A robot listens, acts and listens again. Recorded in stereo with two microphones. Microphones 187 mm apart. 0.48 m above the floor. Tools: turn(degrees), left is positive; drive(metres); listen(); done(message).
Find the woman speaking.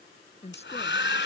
turn(degrees=35)
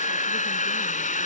listen()
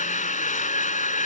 listen()
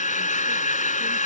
done("I heard a woman speaking, but can't make it out now. It was about straight ahead or 110° left.")